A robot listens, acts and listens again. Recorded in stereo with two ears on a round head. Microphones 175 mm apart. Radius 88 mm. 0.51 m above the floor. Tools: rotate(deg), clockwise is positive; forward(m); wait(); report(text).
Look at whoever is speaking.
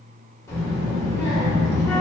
rotate(-15)
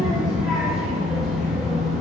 report("Facing the child speaking, under 1 m away.")